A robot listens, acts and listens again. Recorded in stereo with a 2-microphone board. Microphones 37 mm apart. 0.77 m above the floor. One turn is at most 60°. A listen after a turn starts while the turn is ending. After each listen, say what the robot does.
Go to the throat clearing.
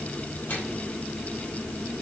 Keep listening.
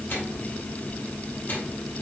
Keep listening.
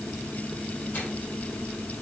I can't make out throat clearing, only a microwave.